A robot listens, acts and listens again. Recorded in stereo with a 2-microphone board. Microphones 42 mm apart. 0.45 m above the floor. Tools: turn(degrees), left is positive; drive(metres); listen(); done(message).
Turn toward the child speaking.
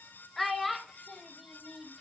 turn(degrees=-30)
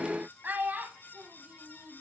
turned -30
turn(degrees=-130)
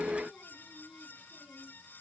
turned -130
listen()
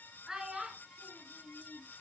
turn(degrees=-15)
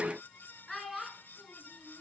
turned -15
done("Found it: a child speaking, straight ahead, over 4 m away.")